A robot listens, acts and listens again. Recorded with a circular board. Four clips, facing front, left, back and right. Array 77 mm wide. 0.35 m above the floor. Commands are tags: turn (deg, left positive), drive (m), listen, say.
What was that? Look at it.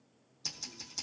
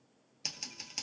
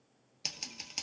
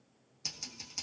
<turn deg="155"/>
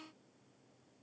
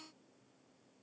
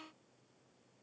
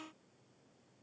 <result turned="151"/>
<listen/>
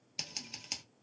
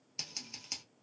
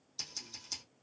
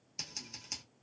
<say>Found it: scissors, straight ahead.</say>